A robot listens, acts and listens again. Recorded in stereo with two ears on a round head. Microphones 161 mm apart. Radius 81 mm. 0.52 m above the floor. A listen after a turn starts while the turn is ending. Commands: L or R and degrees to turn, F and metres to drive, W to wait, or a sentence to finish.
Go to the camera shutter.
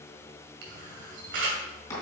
R65
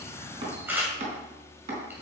R10
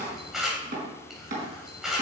F1.0
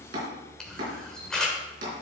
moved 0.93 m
F1.0
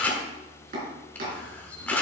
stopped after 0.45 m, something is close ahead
L10
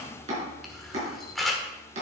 Arrived at the camera shutter, straight ahead.